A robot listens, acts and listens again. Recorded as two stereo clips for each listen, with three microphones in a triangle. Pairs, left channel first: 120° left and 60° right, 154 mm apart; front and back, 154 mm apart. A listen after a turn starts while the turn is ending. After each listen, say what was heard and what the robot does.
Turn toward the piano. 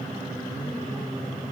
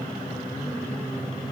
Keep listening.
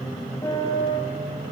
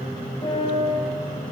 The piano: 55° left. Turn 55° left.
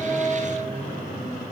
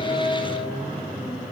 Keep listening.
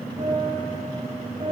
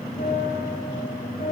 The piano is now 15° right. Turn 15° right.
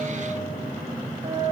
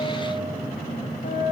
Found it: a piano, straight ahead, over 4 m away.